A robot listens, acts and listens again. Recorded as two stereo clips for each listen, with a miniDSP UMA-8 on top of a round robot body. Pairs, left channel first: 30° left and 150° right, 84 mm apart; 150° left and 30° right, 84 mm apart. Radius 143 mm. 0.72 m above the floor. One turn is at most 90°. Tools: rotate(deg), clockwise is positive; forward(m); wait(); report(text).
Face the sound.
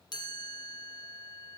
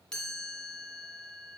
rotate(-70)
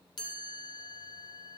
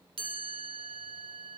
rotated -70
rotate(10)
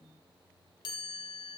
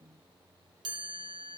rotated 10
report("Found it: a chime, straight ahead, 2 to 4 m away.")